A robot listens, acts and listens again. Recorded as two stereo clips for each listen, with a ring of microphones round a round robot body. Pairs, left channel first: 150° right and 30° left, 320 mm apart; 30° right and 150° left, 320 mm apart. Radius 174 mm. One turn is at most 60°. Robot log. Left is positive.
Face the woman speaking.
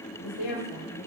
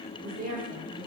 note: The woman speaking: 145° right.
cmd yaw -60
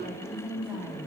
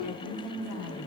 note: The woman speaking is now 50° right.
cmd yaw -50
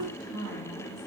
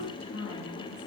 note: The woman speaking is now 20° left.
cmd yaw +20
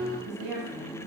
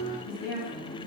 note: The woman speaking is now 20° left.
cmd yaw +20
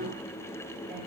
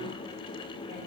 cmd idle
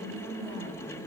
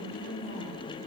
note: The woman speaking is now 15° left.
cmd yaw +15
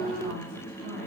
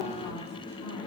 cmd idle
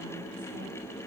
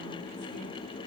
cmd idle
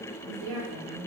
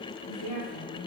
end: Found it: a woman speaking, straight ahead.